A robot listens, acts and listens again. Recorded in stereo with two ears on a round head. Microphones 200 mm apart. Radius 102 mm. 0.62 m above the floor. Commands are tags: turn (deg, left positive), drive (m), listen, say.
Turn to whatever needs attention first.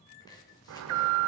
<turn deg="-70"/>
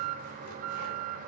<turn deg="-35"/>
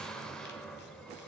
<say>Found it: an alarm, straight ahead.</say>